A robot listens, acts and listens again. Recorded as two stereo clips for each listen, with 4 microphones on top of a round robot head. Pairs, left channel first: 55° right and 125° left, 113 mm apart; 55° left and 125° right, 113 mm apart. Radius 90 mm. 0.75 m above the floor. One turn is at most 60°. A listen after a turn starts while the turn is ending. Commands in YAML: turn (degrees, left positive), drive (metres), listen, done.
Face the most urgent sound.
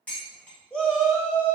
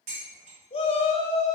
turn: 25
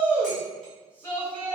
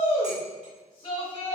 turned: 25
turn: 20
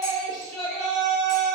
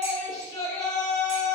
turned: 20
done: "Facing the shout."